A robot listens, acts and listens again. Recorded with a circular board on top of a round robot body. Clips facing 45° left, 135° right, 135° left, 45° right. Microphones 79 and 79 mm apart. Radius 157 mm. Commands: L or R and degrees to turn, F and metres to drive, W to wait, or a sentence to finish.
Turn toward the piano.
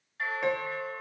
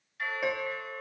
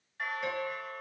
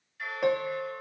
R50
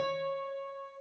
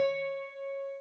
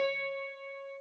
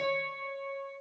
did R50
L15
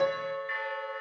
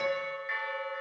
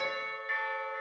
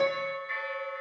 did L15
Facing the piano, 1 to 2 m away.